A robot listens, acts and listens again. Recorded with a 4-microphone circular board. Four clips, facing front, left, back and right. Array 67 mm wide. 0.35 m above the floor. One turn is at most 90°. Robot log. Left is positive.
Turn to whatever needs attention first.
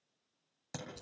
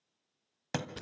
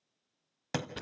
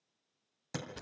cmd idle
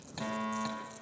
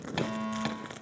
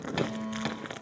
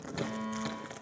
note: The fire alarm: 25° left.
cmd yaw +25
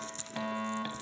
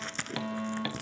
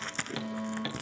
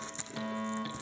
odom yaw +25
end: Found it: a fire alarm, straight ahead, 2 to 4 m away.